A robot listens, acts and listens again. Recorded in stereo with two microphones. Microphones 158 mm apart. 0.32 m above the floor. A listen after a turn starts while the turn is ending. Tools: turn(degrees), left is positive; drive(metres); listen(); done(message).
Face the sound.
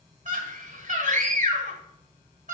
turn(degrees=-50)
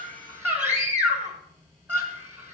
turn(degrees=-15)
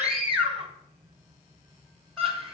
done("Found it: a scream, straight ahead, 1 to 2 m away.")